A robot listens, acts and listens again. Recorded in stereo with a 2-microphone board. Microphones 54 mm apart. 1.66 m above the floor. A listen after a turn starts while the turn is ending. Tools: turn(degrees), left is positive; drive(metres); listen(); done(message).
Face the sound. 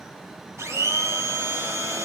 turn(degrees=-90)
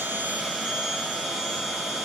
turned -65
turn(degrees=-15)
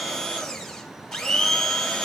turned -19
done("Found it: a blender, straight ahead.")